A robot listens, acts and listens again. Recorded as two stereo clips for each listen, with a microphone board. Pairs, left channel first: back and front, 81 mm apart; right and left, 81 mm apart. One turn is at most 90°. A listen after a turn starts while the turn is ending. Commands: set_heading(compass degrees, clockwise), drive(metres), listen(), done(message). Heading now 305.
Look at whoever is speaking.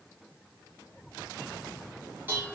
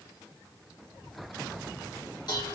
listen()
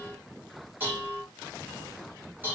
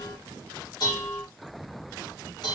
listen()
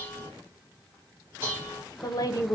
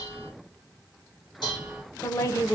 set_heading(35)
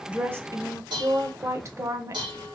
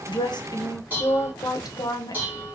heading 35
set_heading(85)
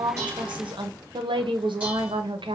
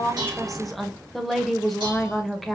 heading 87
done("Facing the woman speaking, under 1 m away.")